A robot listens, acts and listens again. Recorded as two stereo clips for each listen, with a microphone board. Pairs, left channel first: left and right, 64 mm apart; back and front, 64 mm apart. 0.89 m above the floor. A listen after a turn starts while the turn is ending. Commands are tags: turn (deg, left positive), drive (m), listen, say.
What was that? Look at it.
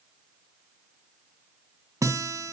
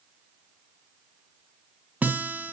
<turn deg="-60"/>
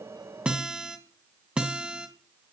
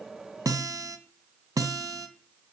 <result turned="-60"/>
<turn deg="-15"/>
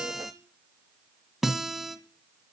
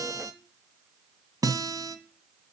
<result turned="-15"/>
<say>Facing the guitar, 1 to 2 m away.</say>